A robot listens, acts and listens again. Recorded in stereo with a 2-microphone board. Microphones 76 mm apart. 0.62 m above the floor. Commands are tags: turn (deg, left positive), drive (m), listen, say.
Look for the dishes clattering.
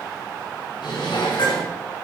<turn deg="90"/>
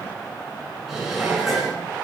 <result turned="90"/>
<say>Facing the dishes clattering.</say>